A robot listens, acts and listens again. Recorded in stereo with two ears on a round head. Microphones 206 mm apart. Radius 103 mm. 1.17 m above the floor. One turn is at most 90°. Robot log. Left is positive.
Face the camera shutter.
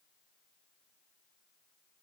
cmd idle
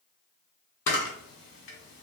note: The camera shutter: about 60° left or 120° left.
cmd yaw +60
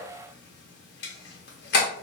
note: So it is at 55° left.
cmd yaw +55
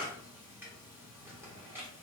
cmd idle
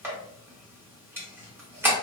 note: The camera shutter is now 10° right.
cmd yaw -10
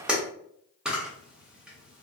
end: Facing the camera shutter.